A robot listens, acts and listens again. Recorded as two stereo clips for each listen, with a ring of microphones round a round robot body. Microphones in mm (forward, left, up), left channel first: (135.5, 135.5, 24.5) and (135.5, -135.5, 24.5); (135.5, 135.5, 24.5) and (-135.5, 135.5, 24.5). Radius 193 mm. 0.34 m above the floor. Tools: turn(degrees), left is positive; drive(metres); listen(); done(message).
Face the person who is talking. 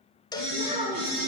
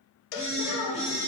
turn(degrees=-25)
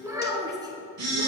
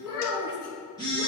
turn(degrees=-15)
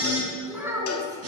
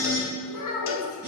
turn(degrees=-10)
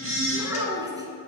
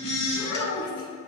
turn(degrees=-15)
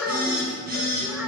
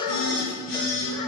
listen()
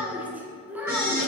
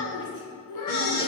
done("Found it: a child speaking, straight ahead, 2 to 4 m away.")